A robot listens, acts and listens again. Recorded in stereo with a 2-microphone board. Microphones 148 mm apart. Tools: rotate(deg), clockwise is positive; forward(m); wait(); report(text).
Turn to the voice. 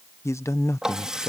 rotate(-20)
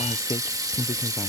rotate(-140)
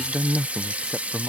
report("Facing the man speaking.")